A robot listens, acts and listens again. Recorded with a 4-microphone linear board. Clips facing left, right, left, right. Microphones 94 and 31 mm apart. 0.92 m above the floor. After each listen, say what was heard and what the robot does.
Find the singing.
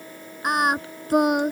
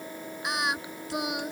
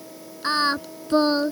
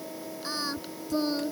The singing: about 50° left or 130° left. Turn 50° left.
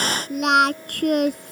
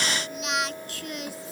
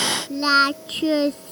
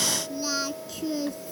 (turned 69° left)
So it is at 60° left. Turn 60° left.
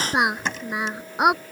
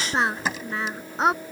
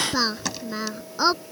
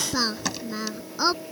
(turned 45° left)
The singing is now 15° left. Turn 15° left.
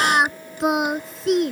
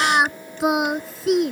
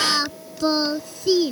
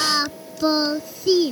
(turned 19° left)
Found it: singing, straight ahead.